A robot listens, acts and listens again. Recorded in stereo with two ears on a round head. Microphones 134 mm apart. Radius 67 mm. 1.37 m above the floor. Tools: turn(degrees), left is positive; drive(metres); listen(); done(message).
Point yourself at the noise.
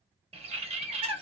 turn(degrees=-40)
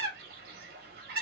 turn(degrees=-100)
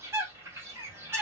turn(degrees=-20)
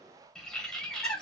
done("Found it: a bird, straight ahead.")